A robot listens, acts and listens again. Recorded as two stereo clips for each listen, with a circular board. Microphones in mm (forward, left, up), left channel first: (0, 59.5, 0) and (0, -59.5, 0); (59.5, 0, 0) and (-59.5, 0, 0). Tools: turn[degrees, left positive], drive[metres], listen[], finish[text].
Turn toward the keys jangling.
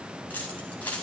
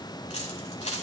Thought: The keys jangling: 15° left.
Action: turn[15]
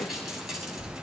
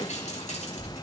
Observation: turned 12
Action: finish[Facing the keys jangling, over 4 m away.]